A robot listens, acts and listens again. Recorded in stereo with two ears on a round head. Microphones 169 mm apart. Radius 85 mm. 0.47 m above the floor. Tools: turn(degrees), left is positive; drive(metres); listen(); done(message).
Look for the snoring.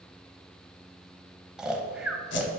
turn(degrees=-30)
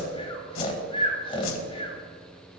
turn(degrees=25)
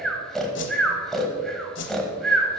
done("Found it: snoring, straight ahead, 1 to 2 m away.")